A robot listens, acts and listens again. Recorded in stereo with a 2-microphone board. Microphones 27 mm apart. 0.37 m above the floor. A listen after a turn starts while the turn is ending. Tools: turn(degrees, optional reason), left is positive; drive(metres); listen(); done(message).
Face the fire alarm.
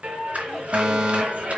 turn(degrees=-40, reason="The fire alarm: about 40° right or 140° right.")
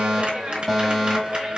done("Found it: a fire alarm, straight ahead.")